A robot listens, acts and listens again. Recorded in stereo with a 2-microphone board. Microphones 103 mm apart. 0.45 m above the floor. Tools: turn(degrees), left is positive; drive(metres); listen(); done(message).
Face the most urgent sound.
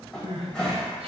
turn(degrees=-75)
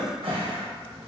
listen()
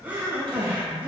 turn(degrees=-20)
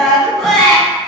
done("Found it: crying, straight ahead.")